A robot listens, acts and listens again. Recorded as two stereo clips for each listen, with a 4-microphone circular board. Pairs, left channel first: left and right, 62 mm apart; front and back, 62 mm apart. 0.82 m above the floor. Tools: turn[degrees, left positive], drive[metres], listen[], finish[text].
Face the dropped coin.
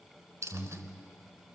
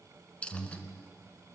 Thought: The dropped coin: 65° right.
Action: turn[-65]
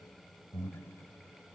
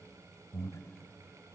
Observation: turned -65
Action: finish[Facing where the dropped coin came from. I can't hear it now.]